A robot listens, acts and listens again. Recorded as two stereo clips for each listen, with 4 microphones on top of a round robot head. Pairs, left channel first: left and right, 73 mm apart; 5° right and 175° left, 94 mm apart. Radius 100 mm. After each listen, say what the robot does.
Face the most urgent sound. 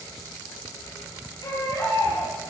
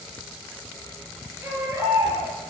Turn 110° left.
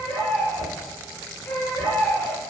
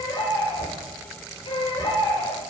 Turn 15° left.
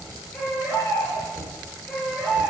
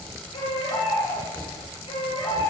Facing the baby crying, over 4 m away.